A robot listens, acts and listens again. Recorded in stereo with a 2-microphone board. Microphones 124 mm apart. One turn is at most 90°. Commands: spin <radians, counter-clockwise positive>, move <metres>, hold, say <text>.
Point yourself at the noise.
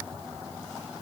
hold
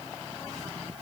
hold
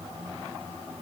say I can't make out anything.